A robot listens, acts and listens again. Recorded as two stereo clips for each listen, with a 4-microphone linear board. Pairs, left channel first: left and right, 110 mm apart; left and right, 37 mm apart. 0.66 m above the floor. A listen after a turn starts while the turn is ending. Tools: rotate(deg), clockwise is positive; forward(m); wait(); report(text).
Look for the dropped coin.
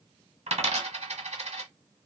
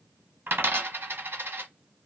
rotate(75)
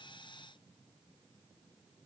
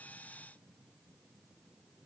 wait()
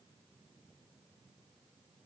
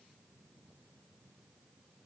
report("I heard a dropped coin, but can't make it out now. It was about straight ahead or 30° right.")